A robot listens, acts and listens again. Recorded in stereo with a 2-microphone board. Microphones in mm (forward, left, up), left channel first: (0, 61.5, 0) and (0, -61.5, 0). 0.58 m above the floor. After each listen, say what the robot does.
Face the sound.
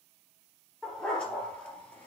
Turn 30° left.
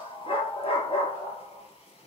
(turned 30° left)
Turn 125° left.
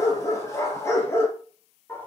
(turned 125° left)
Turn 20° left.
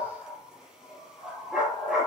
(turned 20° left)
Found it: a dog barking, straight ahead, 2 to 4 m away.